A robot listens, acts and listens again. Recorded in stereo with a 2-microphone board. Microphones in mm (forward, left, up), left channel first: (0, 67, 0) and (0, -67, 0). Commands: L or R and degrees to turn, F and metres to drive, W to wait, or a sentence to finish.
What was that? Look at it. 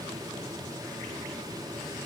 W
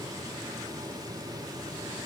W
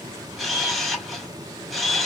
L30
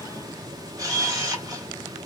R30
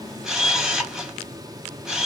Found it: a camera shutter, straight ahead.